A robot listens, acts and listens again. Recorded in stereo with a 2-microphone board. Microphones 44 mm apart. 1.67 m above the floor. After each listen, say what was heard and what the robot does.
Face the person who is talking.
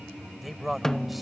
Turn 30° right.
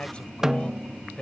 So it is at 25° left. Turn 25° left.
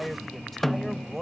Facing the man speaking.